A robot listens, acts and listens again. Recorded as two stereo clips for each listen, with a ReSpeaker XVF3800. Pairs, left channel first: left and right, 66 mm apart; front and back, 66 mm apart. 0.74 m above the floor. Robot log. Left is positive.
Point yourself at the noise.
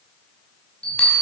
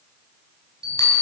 note: The bell: 20° left.
cmd yaw +20
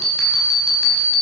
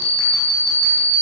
note: The bell is now 10° left.
cmd yaw +10
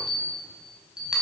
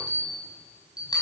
end: Found it: a bell, straight ahead.